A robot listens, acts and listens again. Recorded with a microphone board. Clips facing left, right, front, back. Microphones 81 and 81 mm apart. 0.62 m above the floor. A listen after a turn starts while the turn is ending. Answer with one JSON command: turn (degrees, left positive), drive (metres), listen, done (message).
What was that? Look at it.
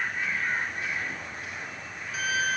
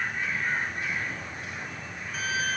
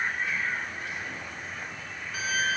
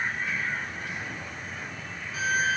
{"done": "Found it: a violin, straight ahead, 1 to 2 m away."}